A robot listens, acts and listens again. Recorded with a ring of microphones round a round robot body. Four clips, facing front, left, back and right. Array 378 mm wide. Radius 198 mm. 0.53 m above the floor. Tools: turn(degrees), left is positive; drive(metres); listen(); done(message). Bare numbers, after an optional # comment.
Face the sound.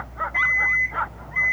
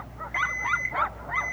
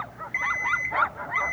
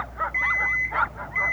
# The alarm clock: 145° left.
turn(145)
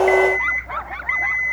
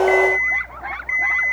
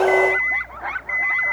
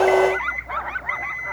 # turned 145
done("Found it: an alarm clock, straight ahead.")